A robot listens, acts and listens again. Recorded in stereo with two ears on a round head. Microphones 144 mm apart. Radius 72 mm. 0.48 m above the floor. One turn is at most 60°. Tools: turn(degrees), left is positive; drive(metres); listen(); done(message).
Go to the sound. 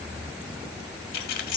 turn(degrees=60)
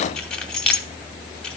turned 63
drive(metres=1.0)
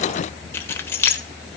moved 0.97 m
turn(degrees=15)
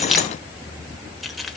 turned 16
drive(metres=1.0)
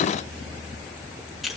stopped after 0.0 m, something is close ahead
done("Arrived at the keys jangling, straight ahead.")